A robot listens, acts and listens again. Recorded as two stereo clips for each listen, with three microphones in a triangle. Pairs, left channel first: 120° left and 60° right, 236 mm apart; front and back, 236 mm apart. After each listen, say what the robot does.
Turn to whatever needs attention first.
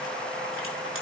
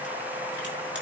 Keep listening.
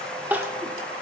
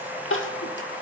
Turn 20° left.
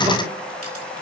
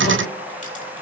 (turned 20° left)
Keep listening.
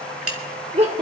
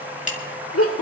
Facing the crying, 1 to 2 m away.